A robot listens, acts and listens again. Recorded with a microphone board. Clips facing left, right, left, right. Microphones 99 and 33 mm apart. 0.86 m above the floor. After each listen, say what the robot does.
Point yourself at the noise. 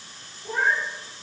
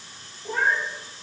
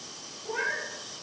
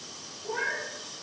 Turn 30° left.
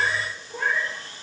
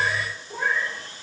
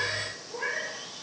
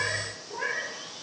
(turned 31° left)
Turn 10° right.
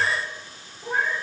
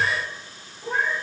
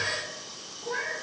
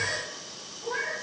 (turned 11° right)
Turn 10° left.
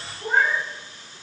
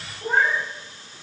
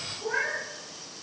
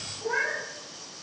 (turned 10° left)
Facing the cat meowing.